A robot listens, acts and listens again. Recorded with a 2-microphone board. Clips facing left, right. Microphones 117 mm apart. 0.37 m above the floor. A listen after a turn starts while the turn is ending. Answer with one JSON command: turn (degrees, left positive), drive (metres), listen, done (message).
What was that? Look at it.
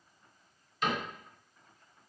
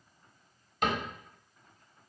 {"turn": -60}
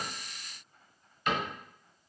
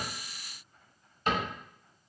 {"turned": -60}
{"turn": -45}
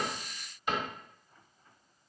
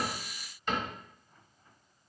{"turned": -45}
{"turn": 10}
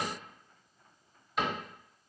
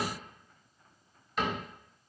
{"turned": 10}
{"done": "Facing the cupboard door, 1 to 2 m away."}